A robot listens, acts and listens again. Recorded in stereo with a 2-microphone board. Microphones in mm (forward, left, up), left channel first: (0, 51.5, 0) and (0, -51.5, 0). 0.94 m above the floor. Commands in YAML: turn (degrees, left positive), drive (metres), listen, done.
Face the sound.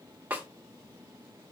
turn: -15
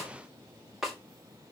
done: "Found it: a snare drum, straight ahead, 2 to 4 m away."